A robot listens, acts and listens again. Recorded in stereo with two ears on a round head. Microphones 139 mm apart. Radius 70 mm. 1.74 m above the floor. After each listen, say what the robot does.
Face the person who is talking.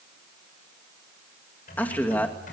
Turn 30° left.
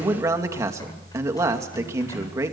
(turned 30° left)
Turn 20° right.
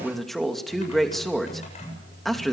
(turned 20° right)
Found it: a man speaking, straight ahead.